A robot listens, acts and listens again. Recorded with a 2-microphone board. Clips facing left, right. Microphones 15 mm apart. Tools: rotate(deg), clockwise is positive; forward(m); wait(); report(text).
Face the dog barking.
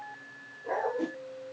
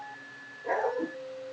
rotate(55)
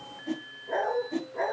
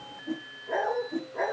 report("Found it: a dog barking, straight ahead.")